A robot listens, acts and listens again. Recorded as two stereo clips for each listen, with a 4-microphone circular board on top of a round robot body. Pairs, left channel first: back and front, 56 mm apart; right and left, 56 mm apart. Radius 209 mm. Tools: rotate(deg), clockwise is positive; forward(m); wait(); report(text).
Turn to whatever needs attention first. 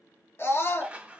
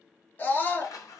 rotate(145)
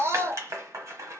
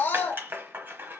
rotate(35)
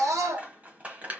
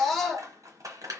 report("Facing the scream.")